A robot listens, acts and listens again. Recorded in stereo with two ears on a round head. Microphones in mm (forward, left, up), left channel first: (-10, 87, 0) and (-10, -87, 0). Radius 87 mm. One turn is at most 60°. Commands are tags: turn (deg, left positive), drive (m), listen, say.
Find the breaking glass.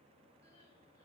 <listen/>
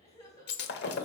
<turn deg="60"/>
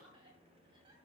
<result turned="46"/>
<listen/>
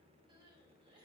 <say>I heard breaking glass, but can't make it out now. It was about 10° left or 75° left.</say>